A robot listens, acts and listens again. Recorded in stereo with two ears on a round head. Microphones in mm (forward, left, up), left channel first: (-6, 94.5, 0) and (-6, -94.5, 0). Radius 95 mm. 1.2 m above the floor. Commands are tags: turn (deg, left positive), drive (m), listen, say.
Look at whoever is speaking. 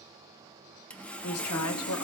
<turn deg="90"/>
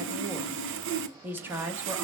<turn deg="-10"/>
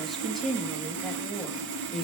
<say>Facing the woman speaking.</say>